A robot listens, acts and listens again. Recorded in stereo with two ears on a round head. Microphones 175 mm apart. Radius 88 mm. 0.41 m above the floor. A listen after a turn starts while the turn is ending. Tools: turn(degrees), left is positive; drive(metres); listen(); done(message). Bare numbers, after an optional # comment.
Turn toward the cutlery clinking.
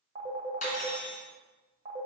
# The cutlery clinking: about 40° left or 140° left.
turn(40)
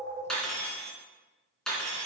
done("Facing the cutlery clinking.")